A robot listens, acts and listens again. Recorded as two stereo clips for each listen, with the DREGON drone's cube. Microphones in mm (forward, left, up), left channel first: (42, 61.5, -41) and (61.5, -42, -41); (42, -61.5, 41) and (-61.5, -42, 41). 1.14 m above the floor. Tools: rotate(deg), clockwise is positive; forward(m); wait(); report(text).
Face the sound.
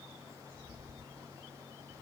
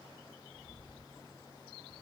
wait()
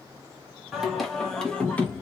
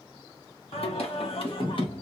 rotate(-25)
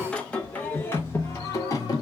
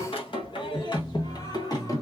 rotate(-45)
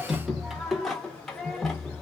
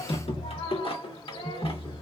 rotate(-15)
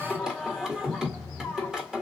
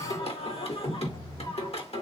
report("Found it: singing, straight ahead.")